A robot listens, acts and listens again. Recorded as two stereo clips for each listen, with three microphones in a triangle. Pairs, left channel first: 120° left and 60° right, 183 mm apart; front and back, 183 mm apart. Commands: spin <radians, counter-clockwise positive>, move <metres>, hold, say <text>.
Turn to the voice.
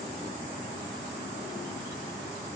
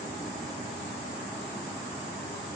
hold
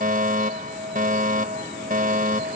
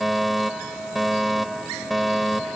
hold
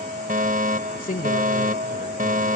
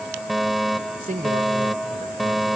spin 2.62
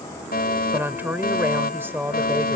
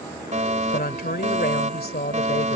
spin 0.26
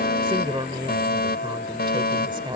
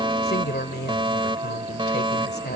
say Found it: a woman speaking, straight ahead.